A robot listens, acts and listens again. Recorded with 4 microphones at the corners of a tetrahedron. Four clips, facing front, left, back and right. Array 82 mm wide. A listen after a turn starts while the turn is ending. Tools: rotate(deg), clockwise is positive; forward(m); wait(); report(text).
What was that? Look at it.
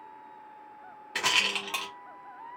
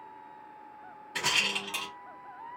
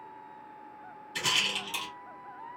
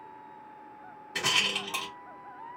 rotate(10)
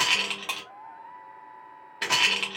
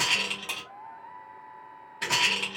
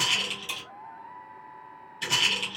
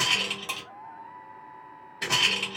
report("Facing the rattle.")